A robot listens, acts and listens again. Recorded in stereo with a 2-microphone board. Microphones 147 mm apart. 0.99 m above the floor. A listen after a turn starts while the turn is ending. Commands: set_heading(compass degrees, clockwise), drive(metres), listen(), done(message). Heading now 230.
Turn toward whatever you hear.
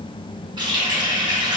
set_heading(260)
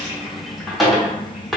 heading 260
done("Facing the running tap.")